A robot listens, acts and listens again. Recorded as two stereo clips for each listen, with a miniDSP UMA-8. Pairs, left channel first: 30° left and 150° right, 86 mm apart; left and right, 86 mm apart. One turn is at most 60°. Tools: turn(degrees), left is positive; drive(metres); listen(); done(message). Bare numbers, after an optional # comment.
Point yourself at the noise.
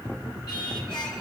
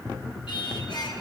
# The singing: 60° left.
turn(60)
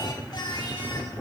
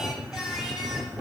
done("Facing the singing, 2 to 4 m away.")